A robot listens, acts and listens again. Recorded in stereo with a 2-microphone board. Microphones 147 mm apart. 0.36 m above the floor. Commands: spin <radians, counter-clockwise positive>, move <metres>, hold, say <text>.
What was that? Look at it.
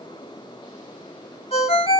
spin 0.79
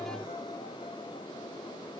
hold
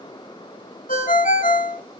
spin 1.57
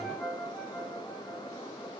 say Facing the ringtone.